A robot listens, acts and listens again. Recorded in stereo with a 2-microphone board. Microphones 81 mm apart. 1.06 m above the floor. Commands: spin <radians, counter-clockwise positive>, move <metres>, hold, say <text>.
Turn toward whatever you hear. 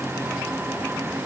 hold
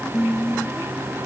spin 0.52
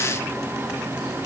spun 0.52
hold
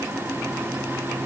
hold
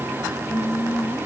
spin 2.88
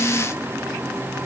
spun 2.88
hold
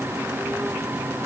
hold
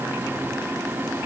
say I heard singing from this way, but can't make it out now.